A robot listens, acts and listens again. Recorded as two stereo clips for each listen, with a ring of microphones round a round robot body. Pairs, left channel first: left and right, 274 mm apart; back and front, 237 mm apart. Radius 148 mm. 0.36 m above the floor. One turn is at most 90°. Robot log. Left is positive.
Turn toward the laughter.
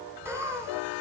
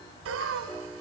note: The laughter: 10° right.
cmd yaw -10
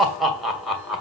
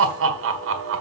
end: Facing the laughter, 2 to 4 m away.